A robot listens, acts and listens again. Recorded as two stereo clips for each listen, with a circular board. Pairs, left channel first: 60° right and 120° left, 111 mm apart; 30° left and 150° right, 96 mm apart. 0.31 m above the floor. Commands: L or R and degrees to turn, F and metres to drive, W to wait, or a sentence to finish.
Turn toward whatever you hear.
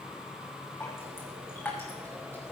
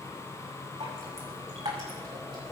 R130
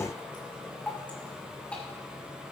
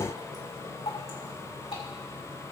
L15
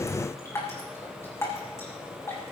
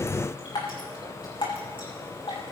Found it: dripping, straight ahead.